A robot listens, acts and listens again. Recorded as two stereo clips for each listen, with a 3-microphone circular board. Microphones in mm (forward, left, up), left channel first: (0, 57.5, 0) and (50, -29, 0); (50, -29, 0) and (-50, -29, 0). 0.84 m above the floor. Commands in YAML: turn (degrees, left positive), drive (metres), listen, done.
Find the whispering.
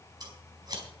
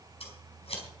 listen: true
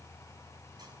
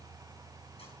listen: true
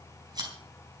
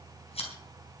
done: "I can't make out whispering to turn to."